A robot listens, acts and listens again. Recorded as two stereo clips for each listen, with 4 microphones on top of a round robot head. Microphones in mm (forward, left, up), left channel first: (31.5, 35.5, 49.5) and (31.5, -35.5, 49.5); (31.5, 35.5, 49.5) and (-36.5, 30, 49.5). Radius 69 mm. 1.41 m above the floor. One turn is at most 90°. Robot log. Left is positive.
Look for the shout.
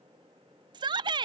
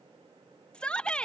note: The shout: 75° right.
cmd yaw -75
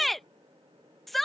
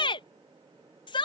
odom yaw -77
end: Facing the shout.